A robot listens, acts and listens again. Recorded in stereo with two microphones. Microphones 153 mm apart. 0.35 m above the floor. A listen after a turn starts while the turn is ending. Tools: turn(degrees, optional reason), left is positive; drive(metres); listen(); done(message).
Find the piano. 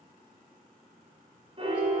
turn(degrees=-40, reason="The piano: about 40° right or 140° right.")
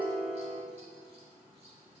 turn(degrees=-100, reason="So it is at 100° right.")
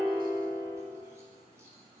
turn(degrees=10, reason="The piano is now 10° left.")
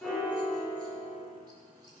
done("Found it: a piano, straight ahead, 1 to 2 m away.")